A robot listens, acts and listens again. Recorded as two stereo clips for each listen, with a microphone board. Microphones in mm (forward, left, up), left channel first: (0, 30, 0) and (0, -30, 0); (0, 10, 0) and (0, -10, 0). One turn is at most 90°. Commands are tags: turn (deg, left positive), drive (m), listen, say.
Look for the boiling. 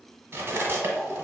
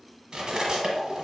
<turn deg="30"/>
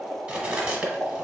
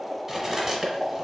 <turn deg="-20"/>
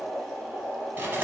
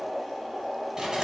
<say>Facing the boiling, 1 to 2 m away.</say>